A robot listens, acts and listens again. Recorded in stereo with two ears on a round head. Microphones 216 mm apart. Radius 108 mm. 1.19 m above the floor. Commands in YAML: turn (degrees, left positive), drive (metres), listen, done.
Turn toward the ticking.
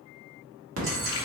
turn: -60
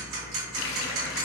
turn: -60
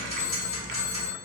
turn: 25
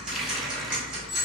done: "Found it: ticking, straight ahead."